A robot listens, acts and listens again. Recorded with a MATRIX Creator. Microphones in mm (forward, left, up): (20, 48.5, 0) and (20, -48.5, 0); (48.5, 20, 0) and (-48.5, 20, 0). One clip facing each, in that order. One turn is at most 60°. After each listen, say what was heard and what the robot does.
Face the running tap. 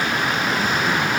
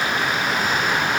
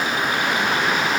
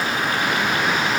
Keep listening.
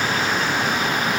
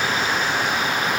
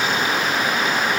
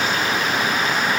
Keep listening.
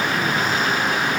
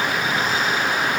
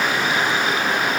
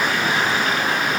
I can't make out a running tap to turn to.